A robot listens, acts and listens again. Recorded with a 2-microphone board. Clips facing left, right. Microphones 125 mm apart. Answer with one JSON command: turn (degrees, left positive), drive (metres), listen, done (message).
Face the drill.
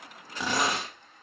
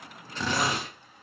{"turn": 30}
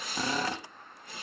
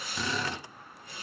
{"turn": 135}
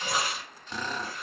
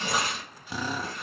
{"turn": -10}
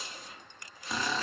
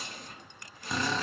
{"done": "Found it: a drill, straight ahead."}